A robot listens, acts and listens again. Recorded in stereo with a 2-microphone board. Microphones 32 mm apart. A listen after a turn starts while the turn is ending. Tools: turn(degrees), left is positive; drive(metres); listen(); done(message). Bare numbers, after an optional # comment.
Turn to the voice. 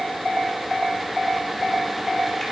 listen()
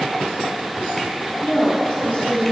# The woman speaking: about 35° left or 145° left.
turn(35)
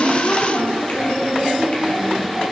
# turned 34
# So it is at 125° left.
turn(125)
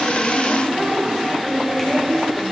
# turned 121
done("Found it: a woman speaking, straight ahead.")